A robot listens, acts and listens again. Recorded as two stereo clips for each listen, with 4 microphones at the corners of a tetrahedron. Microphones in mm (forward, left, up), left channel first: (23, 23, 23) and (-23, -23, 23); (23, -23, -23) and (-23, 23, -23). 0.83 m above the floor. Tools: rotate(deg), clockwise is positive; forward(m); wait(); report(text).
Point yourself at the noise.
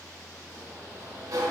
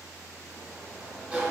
rotate(155)
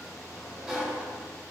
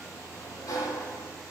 rotate(50)
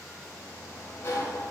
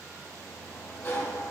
report("Found it: a sliding door, straight ahead, under 1 m away.")